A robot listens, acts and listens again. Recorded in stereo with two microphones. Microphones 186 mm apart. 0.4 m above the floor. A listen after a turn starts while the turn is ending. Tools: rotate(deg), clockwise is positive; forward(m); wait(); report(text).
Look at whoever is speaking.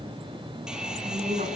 rotate(45)
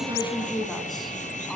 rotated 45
report("Found it: a woman speaking, straight ahead, over 4 m away.")